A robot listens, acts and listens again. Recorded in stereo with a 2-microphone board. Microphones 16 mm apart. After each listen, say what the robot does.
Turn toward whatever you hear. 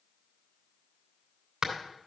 Turn 40° right.
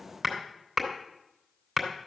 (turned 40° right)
Found it: hammering, straight ahead, 2 to 4 m away.